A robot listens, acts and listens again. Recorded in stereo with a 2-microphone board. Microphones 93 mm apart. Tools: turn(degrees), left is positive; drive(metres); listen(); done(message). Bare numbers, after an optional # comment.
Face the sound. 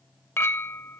# The clink: about 25° left or 155° left.
turn(25)
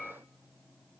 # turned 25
done("Found it: a clink, straight ahead.")